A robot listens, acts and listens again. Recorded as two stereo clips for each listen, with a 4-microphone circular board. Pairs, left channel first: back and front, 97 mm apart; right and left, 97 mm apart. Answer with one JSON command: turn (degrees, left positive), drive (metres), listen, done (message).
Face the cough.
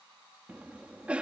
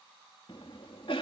{"turn": -75}
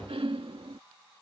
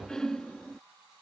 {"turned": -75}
{"done": "Found it: a cough, straight ahead."}